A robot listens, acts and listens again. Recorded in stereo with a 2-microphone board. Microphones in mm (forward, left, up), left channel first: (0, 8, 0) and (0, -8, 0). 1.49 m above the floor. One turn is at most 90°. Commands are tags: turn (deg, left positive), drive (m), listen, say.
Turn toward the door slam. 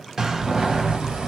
<turn deg="-30"/>
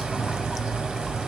<listen/>
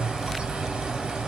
<say>I heard a door slam, but can't make it out now. It was about straight ahead or 120° right.</say>